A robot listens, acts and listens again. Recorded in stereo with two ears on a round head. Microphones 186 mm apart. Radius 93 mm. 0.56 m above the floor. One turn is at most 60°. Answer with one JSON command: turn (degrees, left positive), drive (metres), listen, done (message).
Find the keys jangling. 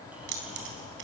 {"turn": -60}
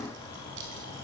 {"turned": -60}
{"turn": -60}
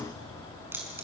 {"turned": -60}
{"turn": -10}
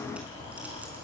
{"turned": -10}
{"listen": true}
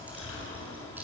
{"turn": -10}
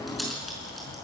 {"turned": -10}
{"done": "Facing the keys jangling."}